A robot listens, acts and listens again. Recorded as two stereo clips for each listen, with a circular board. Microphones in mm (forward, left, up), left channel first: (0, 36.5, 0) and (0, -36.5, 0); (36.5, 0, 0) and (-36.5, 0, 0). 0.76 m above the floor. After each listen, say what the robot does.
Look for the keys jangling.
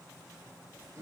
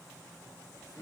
Keep listening.
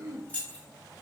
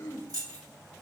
Turn 160° left.
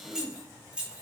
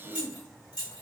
Turn 15° right.
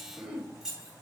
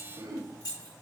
Turn 10° right.
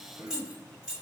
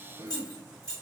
Turn 15° right.
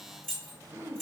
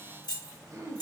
Found it: keys jangling, straight ahead, 2 to 4 m away.